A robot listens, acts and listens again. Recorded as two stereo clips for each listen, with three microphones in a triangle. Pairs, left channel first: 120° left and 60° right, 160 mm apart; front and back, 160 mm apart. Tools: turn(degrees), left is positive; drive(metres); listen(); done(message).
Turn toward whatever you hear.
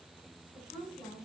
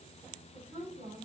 turn(degrees=160)
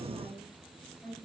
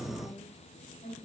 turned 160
turn(degrees=35)
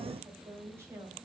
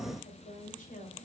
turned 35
turn(degrees=10)
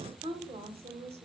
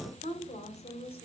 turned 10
turn(degrees=-35)
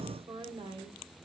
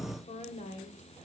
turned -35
turn(degrees=-10)
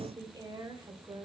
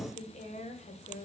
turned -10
done("Facing the woman speaking, 1 to 2 m away.")